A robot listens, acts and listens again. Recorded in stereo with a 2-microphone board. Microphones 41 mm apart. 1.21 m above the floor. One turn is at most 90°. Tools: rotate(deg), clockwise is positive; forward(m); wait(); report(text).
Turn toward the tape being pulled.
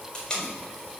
rotate(-15)
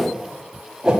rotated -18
wait()
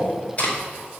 rotate(-90)
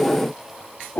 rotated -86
rotate(-60)
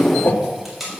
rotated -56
report("Found it: tape being pulled, straight ahead.")